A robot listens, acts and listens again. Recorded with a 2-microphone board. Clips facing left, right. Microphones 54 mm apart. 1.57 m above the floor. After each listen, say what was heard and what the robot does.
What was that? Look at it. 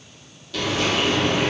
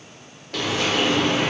The frying: about 50° right or 130° right. Turn 50° right.
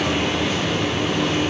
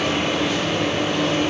Found it: frying, straight ahead.